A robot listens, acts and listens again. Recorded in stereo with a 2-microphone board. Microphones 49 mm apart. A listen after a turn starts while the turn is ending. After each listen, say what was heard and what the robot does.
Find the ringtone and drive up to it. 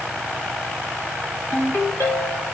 Turn 90° left.
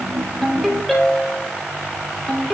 Drive 1.0 m forward.
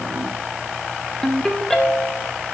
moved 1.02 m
The ringtone is now 10° left. Turn 10° left.
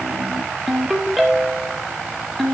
Drive 1.0 m forward.
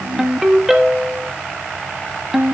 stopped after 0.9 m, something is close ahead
The ringtone is now 10° right. Turn 10° right.
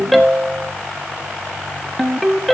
Arrived at the ringtone, straight ahead.